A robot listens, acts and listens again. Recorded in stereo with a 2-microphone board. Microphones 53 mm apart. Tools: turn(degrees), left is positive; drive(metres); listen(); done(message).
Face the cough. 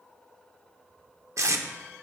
listen()
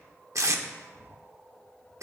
listen()
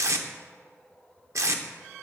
done("I can't make out a cough, only tape being pulled.")